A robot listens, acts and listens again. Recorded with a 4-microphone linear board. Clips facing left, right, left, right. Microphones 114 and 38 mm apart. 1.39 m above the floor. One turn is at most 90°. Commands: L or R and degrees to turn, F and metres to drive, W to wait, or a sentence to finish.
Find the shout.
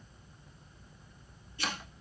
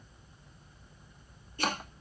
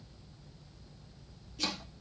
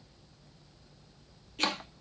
W
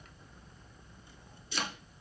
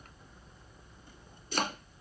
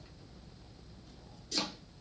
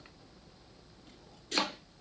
W
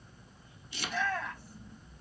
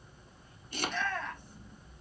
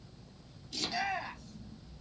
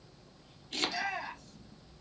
L30
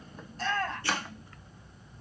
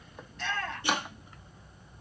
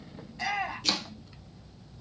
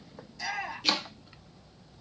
L90
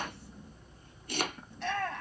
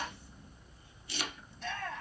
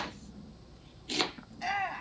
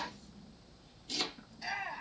L75
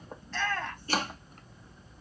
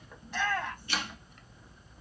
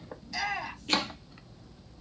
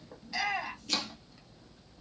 R15
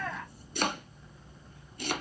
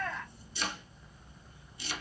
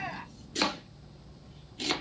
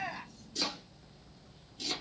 Facing the shout, 1 to 2 m away.